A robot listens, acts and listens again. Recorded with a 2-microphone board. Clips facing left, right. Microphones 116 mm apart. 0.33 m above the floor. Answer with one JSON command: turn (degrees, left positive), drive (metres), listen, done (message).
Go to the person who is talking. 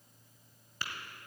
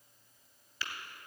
{"listen": true}
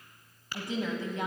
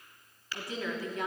{"turn": 25}
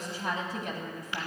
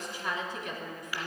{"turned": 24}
{"turn": 130}
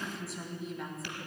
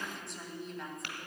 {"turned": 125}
{"drive": 1.0}
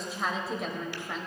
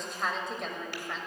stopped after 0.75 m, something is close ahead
{"done": "I am next to the woman speaking."}